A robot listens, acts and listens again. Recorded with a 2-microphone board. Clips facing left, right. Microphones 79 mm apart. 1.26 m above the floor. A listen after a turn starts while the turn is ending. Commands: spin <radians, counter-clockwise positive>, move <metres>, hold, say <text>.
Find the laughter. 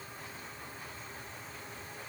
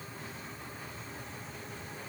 hold
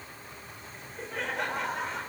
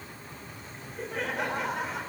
spin -0.52
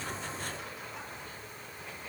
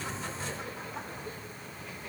hold
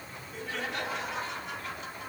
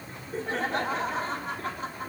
spin -2.36
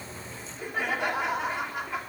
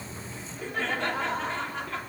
spin 0.26
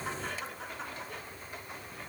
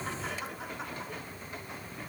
say Found it: laughter, straight ahead.